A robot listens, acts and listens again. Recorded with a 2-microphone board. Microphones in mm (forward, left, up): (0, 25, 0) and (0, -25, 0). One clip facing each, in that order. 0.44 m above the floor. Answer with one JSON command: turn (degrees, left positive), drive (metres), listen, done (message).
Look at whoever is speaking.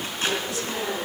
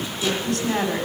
{"turn": -55}
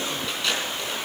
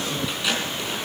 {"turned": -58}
{"listen": true}
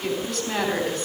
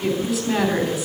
{"done": "Found it: a woman speaking, straight ahead, 2 to 4 m away."}